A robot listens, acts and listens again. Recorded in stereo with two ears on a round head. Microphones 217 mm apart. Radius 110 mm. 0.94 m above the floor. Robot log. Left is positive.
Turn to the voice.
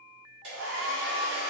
cmd idle
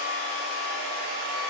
cmd idle
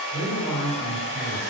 note: The man speaking: about 25° left or 155° left.
cmd yaw +25
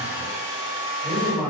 end: Facing the man speaking, 1 to 2 m away.